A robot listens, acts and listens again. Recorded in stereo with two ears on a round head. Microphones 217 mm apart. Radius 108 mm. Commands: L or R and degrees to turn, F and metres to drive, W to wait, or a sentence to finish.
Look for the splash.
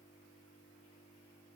W
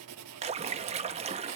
R25
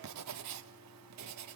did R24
W
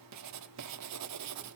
I heard a splash, but can't make it out now. It was about straight ahead or 130° right.